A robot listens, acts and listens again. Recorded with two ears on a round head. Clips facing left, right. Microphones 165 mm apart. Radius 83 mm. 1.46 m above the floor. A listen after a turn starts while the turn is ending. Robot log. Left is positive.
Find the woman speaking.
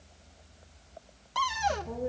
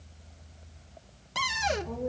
cmd yaw +30
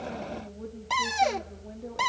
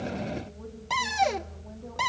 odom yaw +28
note: So it is at 155° left.
cmd yaw +155
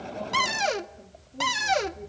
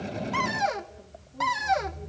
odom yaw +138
note: The woman speaking is now 25° left.
cmd yaw +25
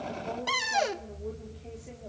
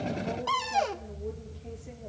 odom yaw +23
end: Found it: a woman speaking, straight ahead.